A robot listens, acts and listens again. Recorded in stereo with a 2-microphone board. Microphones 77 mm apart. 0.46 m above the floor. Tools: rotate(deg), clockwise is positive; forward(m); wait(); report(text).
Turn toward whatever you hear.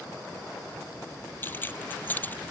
rotate(-20)
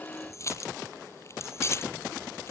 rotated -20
rotate(-35)
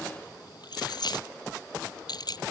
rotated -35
rotate(-120)
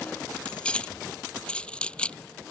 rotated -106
rotate(-15)
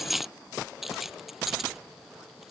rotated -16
report("Facing the keys jangling.")